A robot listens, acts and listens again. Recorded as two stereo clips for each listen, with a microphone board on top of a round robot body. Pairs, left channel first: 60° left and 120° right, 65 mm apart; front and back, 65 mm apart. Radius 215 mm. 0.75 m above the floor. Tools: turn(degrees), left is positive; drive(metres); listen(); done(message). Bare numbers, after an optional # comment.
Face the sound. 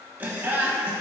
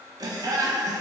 # The laughter: 170° left.
turn(170)
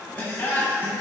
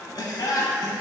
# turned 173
done("Found it: laughter, straight ahead, 1 to 2 m away.")